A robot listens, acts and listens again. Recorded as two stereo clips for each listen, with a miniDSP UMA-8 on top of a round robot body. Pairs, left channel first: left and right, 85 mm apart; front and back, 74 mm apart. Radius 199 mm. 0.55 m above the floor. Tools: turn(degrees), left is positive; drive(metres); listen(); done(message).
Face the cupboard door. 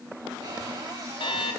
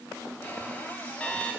turn(degrees=-70)
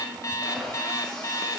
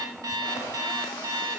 listen()
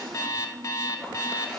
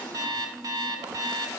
listen()
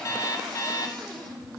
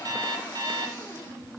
done("Facing the cupboard door, over 4 m away.")